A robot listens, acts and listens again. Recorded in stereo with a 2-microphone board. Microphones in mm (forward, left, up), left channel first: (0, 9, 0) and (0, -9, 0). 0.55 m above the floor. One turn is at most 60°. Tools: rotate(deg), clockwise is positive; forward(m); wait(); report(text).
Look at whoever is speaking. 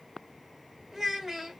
rotate(30)
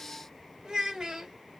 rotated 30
rotate(60)
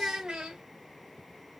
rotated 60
rotate(55)
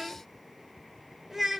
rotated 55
rotate(10)
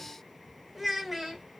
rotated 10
report("Found it: a child speaking, straight ahead, 1 to 2 m away.")